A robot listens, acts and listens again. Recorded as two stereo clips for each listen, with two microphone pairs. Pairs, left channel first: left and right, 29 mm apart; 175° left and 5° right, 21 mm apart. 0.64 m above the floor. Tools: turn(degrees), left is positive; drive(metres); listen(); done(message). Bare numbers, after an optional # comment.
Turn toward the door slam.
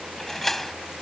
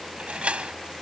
# The door slam: 10° left.
turn(10)
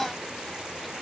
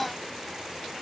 done("I heard a door slam from this way, but can't make it out now.")